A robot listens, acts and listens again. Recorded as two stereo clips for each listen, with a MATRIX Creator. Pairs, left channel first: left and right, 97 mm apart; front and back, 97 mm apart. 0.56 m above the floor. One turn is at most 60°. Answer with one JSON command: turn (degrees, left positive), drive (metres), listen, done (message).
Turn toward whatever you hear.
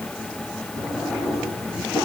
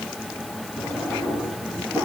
{"turn": 60}
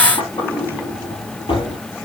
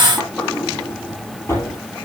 {"turn": 60}
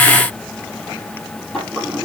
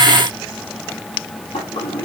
{"done": "Facing the drawer."}